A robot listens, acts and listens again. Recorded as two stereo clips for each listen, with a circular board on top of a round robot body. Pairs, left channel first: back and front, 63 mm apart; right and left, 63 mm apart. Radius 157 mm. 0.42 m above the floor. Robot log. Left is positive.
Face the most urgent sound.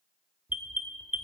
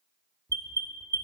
note: The alarm: 65° left.
cmd yaw +65
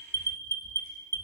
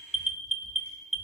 end: Facing the alarm, 1 to 2 m away.